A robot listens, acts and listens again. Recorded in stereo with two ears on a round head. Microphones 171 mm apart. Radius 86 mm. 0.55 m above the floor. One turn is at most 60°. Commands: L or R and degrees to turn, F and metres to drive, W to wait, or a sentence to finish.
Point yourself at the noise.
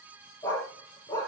L20
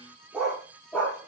L30
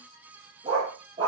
R25
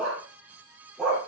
Found it: a dog barking, straight ahead, over 4 m away.